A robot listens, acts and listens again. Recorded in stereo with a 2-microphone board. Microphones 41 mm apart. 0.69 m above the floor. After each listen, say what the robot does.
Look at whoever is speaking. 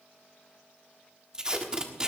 Keep listening.
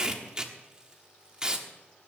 Keep listening.
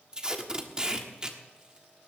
I can't make out anyone speaking to turn to.